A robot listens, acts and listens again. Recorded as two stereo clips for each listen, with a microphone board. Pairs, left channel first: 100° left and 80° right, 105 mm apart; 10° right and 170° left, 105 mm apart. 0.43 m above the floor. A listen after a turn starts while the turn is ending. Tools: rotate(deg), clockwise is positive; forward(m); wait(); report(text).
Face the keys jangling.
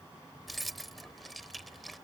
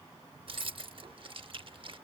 rotate(170)
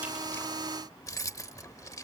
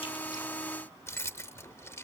rotate(-50)
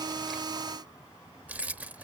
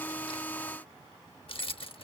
report("Found it: keys jangling, straight ahead.")